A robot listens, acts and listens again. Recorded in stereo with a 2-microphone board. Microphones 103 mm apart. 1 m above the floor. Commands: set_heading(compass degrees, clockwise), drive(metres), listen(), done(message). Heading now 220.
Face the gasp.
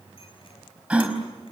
set_heading(250)
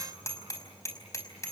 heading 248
listen()
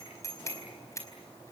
done("I heard a gasp, but can't make it out now. It was about 15° left or 140° right.")